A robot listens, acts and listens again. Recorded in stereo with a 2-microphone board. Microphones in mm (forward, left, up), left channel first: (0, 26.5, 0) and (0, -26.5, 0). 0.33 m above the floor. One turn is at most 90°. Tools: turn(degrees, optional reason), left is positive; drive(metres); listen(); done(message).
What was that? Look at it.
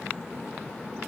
listen()
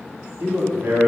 turn(degrees=-35, reason="The man speaking: about 35° right or 145° right.")
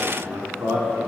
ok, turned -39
turn(degrees=-90, reason="So it is at 115° right.")
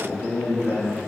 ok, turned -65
turn(degrees=-35, reason="The man speaking is now 35° right.")
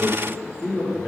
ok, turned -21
turn(degrees=-15, reason="The man speaking is now 15° right.")
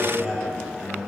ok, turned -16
done("Found it: a man speaking, straight ahead.")